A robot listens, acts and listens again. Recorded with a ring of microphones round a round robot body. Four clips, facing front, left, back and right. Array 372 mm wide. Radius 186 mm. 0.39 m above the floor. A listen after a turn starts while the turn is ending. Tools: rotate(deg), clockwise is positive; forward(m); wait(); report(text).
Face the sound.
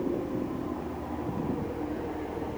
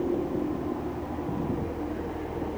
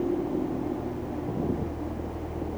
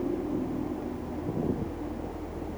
wait()
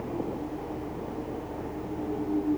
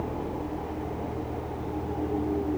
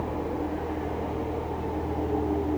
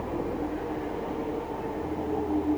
wait()
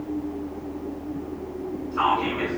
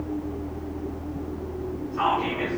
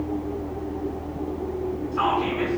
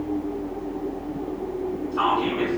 rotate(75)
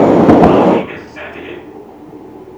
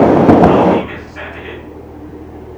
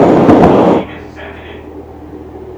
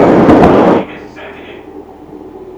rotate(-25)
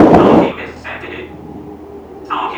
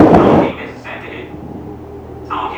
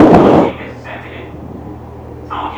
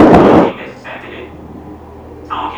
report("Found it: whispering, straight ahead.")